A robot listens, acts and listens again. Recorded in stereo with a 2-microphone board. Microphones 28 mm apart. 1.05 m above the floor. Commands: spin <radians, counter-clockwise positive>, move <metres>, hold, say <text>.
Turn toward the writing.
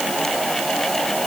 hold
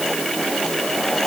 hold
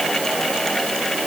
say I can't make out writing.